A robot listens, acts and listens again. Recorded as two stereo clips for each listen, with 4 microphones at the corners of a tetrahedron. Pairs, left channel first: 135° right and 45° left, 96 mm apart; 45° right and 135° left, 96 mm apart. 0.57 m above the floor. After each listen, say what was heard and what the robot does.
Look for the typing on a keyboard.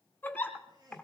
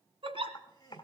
The typing on a keyboard: 60° right. Turn 60° right.
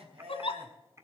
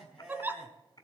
The typing on a keyboard is now 10° right. Turn 10° right.
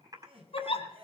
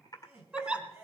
Facing the typing on a keyboard.